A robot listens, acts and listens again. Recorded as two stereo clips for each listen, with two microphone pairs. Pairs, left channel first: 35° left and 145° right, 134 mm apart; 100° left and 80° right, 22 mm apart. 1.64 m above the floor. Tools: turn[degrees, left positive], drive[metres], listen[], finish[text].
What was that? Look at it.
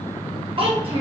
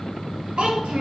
Thought: The child speaking: 105° right.
Action: turn[-105]
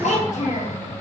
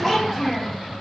Thought: The child speaking is now 15° left.
Action: turn[15]
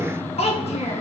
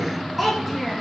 Action: finish[Found it: a child speaking, straight ahead.]